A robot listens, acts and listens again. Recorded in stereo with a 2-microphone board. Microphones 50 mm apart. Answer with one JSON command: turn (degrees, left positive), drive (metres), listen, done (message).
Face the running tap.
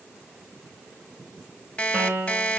{"listen": true}
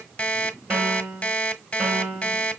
{"listen": true}
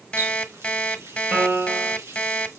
{"turn": -70}
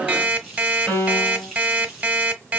{"done": "Facing the running tap."}